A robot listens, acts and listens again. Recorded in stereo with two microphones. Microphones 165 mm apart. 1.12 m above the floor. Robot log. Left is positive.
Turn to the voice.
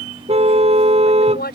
cmd yaw +90
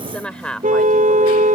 end: Found it: a woman speaking, straight ahead.